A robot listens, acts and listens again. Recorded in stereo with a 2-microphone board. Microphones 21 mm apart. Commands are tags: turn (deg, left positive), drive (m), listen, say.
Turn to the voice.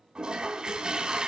<listen/>
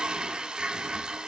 <listen/>
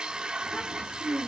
<turn deg="70"/>
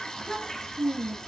<turn deg="15"/>
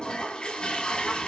<listen/>
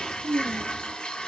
<say>Facing the child speaking.</say>